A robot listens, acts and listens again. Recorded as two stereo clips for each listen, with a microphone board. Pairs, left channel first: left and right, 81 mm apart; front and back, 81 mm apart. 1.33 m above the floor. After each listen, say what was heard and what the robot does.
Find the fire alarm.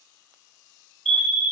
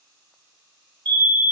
The fire alarm: 175° left. Turn 175° left.
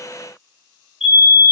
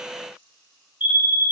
The fire alarm is now 10° right. Turn 10° right.
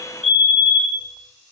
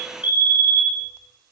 Found it: a fire alarm, straight ahead, 2 to 4 m away.